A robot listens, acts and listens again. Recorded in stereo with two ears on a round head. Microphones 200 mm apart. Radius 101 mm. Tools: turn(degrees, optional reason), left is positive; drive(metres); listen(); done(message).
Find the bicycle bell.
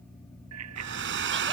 turn(degrees=-75, reason="The bicycle bell: about 75° right or 105° right.")
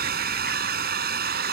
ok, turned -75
listen()
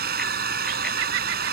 listen()
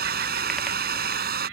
done("I heard a bicycle bell, but can't make it out now. It was about straight ahead or 30° right.")